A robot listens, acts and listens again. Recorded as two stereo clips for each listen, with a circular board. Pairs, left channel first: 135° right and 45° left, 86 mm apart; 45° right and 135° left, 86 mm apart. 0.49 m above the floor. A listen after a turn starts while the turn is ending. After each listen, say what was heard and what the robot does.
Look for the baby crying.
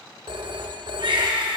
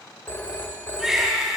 The baby crying: 50° left. Turn 50° left.
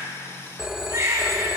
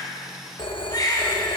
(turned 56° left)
Facing the baby crying.